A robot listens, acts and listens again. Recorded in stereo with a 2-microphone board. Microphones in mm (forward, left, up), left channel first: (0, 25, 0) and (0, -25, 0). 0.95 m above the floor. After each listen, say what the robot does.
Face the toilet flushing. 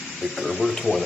Turn 30° left.
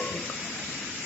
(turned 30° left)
Keep listening.
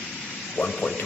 Turn 140° left.
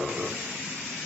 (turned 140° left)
Turn 15° right.
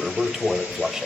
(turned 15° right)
Turn 10° right.
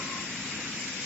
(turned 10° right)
Keep listening.
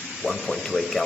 Facing the toilet flushing, 2 to 4 m away.